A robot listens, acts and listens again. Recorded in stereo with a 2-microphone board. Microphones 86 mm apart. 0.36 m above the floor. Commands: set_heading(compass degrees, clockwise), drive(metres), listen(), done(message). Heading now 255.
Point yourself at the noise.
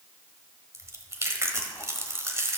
set_heading(290)
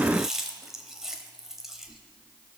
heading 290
done("Found it: chewing, straight ahead, 1 to 2 m away.")